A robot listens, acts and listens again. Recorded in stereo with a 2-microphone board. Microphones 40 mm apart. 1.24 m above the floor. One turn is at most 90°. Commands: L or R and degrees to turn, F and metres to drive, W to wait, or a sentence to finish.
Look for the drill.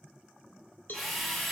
L30
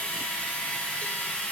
L90
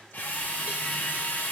L70
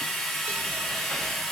L10
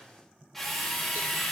Facing the drill, 2 to 4 m away.